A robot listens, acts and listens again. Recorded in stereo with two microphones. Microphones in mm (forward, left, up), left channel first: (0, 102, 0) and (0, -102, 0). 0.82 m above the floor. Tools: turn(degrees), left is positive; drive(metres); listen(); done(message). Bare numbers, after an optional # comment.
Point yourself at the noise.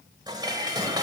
# The dishes clattering: about 20° right or 160° right.
turn(-20)
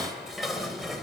done("Facing the dishes clattering.")